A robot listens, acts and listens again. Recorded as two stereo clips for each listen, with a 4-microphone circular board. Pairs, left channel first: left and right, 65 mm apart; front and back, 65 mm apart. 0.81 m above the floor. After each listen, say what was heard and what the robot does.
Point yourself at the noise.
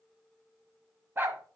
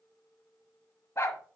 The dog barking: 40° right. Turn 40° right.
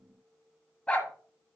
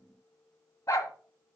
The dog barking is now 20° left. Turn 20° left.
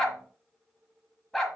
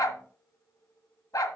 Facing the dog barking, 1 to 2 m away.